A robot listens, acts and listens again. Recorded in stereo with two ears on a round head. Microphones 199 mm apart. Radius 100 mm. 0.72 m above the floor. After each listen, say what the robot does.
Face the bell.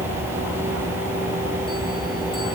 Keep listening.
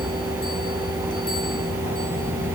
Keep listening.
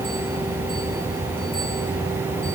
I can't make out a bell.